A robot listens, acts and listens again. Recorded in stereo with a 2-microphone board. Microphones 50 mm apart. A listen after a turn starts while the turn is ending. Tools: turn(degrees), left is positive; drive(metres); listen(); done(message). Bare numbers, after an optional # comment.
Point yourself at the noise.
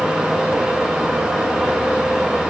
listen()
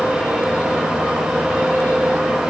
listen()
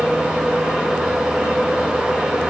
done("I can't make out anything to turn to.")